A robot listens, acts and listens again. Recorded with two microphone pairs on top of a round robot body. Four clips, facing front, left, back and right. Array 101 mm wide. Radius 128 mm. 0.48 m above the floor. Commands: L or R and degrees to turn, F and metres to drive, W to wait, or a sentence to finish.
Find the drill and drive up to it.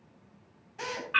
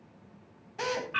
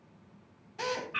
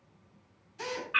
L95
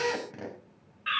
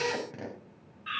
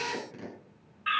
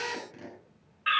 L45
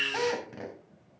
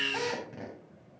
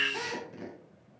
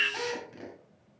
L15
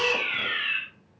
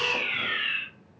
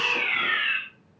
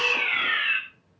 W
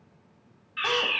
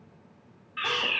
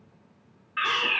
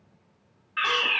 W
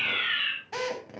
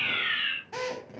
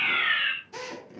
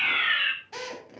F1.0
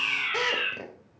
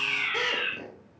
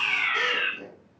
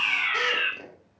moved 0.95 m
F1.0
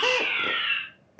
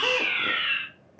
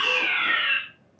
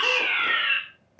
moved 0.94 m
F1.0
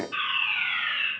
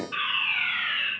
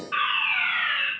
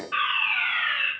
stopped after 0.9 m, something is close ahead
I am next to the drill.